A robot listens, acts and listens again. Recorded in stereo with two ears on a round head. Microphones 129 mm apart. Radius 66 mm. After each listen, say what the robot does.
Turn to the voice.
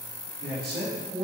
Turn 90° right.
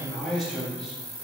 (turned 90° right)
Found it: a man speaking, straight ahead.